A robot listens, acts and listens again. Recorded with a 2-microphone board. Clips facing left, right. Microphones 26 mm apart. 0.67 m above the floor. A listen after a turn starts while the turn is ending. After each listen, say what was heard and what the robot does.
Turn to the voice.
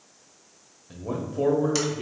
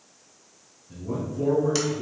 The man speaking: about 55° left or 125° left. Turn 55° left.
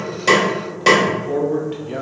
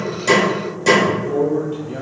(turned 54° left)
So it is at 50° left. Turn 50° left.
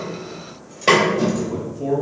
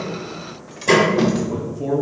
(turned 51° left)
Facing the man speaking.